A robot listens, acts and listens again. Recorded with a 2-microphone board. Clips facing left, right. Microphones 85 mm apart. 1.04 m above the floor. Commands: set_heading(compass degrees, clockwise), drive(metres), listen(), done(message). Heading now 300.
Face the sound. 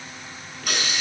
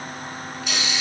set_heading(250)
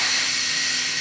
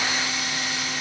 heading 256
set_heading(176)
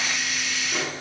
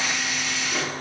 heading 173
done("Facing the hiss, over 4 m away.")